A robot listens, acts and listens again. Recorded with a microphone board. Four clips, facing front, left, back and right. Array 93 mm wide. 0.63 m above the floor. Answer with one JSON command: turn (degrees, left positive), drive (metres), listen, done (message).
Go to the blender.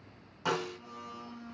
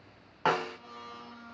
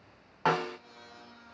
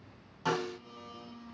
{"turn": 75}
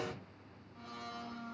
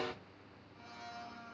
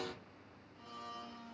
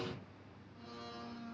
{"turn": 10}
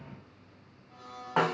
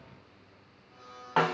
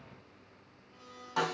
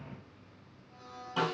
{"drive": 1.0}
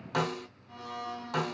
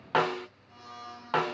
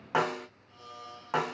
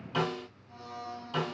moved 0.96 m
{"drive": 1.0}
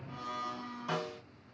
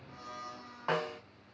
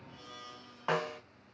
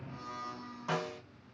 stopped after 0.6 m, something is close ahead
{"done": "I am next to the blender."}